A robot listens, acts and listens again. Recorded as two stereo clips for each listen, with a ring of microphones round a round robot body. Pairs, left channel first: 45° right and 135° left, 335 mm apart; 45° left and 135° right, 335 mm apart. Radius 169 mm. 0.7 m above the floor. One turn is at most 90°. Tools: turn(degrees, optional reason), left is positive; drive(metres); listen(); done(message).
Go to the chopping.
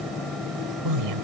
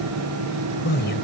listen()
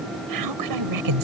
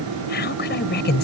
listen()
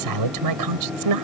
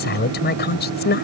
done("I can't make out chopping to turn to.")